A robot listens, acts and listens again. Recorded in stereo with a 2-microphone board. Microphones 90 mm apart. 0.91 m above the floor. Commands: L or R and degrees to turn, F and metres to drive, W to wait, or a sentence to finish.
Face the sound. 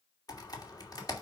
L45
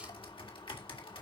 L90
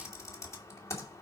L35
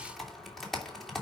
Found it: typing on a keyboard, straight ahead, 2 to 4 m away.